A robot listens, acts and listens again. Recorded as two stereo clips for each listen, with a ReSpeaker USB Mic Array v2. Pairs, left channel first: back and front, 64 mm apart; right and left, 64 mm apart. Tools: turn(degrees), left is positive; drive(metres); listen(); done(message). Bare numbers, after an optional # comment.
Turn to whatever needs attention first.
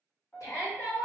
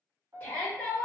# The shout: 150° right.
turn(-150)
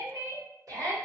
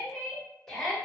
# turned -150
done("Facing the shout.")